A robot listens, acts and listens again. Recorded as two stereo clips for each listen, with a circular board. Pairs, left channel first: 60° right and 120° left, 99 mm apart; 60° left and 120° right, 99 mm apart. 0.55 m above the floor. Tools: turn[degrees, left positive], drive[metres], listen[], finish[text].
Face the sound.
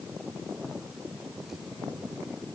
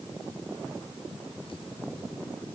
Action: listen[]
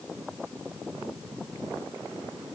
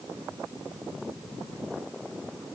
Action: listen[]
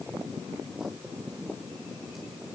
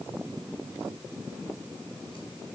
Action: finish[I can't make out anything.]